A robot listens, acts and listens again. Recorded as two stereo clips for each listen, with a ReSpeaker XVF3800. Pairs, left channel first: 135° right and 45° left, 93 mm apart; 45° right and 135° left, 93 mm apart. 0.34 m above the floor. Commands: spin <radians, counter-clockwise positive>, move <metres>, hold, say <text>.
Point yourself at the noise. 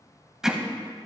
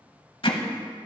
spin -0.61
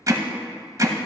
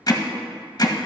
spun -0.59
say Facing the hammering, under 1 m away.